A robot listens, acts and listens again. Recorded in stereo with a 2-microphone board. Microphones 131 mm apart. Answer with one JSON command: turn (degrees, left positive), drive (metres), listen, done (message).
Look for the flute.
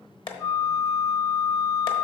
{"turn": 30}
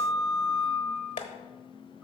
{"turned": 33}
{"done": "Found it: a flute, straight ahead."}